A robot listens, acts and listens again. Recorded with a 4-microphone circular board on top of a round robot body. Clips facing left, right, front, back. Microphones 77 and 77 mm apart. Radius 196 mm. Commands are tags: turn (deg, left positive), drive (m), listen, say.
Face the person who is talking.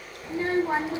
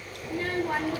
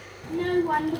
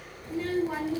<turn deg="25"/>
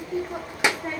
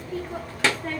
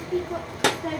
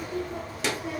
<turn deg="15"/>
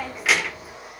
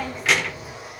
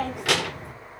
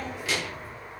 <say>Facing the child speaking, 1 to 2 m away.</say>